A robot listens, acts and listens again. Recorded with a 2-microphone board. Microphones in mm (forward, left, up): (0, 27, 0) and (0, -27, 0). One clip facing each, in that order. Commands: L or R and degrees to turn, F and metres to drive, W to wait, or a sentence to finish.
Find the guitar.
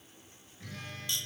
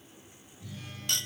L60
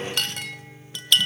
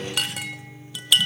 L50
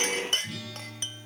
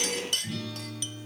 Facing the guitar.